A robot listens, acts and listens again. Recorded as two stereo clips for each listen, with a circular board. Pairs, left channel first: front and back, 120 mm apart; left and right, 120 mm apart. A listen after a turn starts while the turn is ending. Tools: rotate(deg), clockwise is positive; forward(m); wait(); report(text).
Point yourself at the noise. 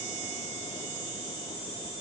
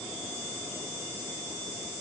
wait()
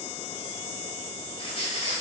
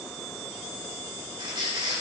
rotate(40)
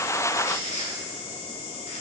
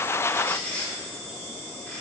rotate(-15)
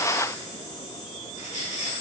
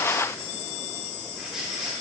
report("Found it: a squeak, straight ahead, 1 to 2 m away.")